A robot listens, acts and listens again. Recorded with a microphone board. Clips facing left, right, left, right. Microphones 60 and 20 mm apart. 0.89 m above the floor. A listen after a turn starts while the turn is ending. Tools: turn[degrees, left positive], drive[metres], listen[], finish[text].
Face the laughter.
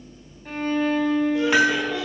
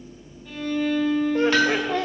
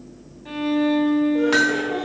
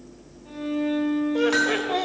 Thought: The laughter: about 50° right or 130° right.
Action: turn[-50]
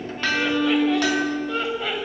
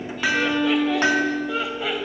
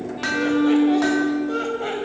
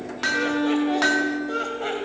Action: finish[Facing the laughter.]